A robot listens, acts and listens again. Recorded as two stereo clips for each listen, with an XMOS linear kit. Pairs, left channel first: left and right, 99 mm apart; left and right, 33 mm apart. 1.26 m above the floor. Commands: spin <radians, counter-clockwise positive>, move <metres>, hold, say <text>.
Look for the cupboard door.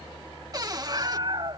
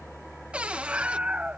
spin -0.79
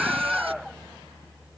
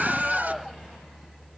hold
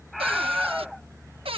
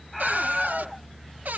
spin -1.48
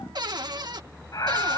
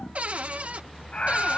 spin -0.87
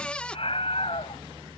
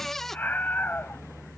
spin 0.26
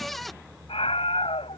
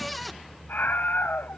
say Found it: a cupboard door, straight ahead.